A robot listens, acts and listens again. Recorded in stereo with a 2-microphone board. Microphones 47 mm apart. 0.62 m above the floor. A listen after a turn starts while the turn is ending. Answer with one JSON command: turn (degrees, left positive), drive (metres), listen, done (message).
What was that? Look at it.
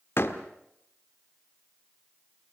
{"turn": 60}
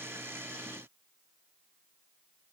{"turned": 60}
{"listen": true}
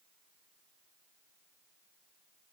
{"done": "I heard a door slam, but can't make it out now. It was about straight ahead or 60° left."}